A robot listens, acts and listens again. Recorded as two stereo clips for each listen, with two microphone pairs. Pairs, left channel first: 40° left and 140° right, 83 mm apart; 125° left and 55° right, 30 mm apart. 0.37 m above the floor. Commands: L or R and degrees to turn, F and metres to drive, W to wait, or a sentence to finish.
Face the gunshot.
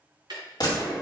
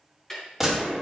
L25
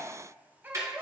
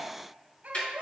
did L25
I heard a gunshot from this way, but can't make it out now.